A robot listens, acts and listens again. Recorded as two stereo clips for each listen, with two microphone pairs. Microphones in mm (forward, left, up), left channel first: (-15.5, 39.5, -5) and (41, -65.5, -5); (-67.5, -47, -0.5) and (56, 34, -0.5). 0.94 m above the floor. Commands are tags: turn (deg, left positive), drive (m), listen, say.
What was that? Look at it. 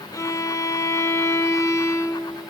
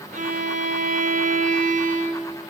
<turn deg="55"/>
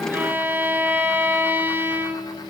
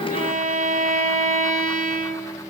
<turn deg="10"/>
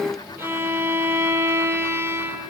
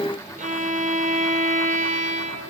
<say>Found it: a violin, straight ahead.</say>